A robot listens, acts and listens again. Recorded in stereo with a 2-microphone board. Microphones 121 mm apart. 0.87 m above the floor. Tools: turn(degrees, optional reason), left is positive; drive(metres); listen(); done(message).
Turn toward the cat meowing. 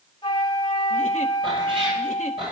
turn(degrees=-40, reason="The cat meowing: about 40° right or 140° right.")
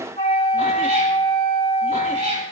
turn(degrees=-100, reason="So it is at 100° right.")
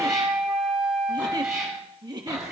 done("Found it: a cat meowing, straight ahead.")